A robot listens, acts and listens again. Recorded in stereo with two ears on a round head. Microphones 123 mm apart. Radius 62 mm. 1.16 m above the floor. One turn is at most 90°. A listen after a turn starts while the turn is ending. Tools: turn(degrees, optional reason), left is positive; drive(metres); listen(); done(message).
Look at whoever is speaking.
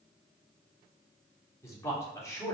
turn(degrees=25, reason="The man speaking: about 25° left or 155° left.")
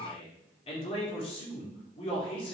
turn(degrees=90, reason="So it is at 135° left.")
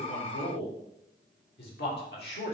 turn(degrees=80, reason="The man speaking is now 80° left.")
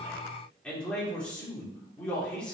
done("Facing the man speaking, 2 to 4 m away.")